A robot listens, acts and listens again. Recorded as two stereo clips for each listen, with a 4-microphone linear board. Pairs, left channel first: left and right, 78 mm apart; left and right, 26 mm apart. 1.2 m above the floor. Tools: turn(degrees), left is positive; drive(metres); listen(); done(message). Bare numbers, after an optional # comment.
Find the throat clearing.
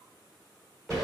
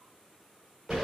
listen()
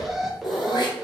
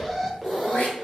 # The throat clearing: about 65° left or 115° left.
turn(65)
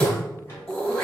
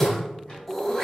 # So it is at 15° left.
turn(15)
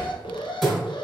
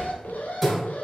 done("Facing the throat clearing, 1 to 2 m away.")